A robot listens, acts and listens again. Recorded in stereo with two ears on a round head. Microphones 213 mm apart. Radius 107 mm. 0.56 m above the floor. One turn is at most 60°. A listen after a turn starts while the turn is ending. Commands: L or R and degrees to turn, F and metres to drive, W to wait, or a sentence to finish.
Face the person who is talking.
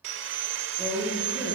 R30
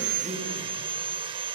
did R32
W
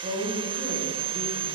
R60
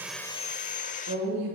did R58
R60
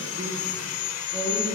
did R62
R25
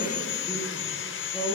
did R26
Facing the woman speaking, over 4 m away.